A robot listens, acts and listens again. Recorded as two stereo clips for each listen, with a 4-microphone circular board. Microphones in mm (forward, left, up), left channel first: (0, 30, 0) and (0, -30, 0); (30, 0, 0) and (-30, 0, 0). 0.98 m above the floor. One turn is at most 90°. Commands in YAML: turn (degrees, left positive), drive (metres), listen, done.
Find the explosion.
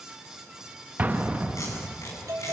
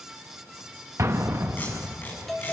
turn: -90
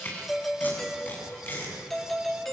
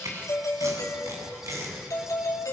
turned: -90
turn: -60
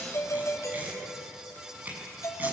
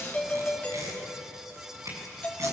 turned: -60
done: "Facing where the explosion came from. I can't hear it now."